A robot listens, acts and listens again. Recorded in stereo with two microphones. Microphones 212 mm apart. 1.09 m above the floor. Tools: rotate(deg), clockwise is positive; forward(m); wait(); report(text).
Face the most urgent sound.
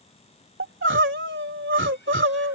rotate(90)
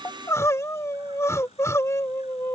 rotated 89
rotate(-15)
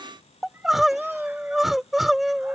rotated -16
report("Facing the crying.")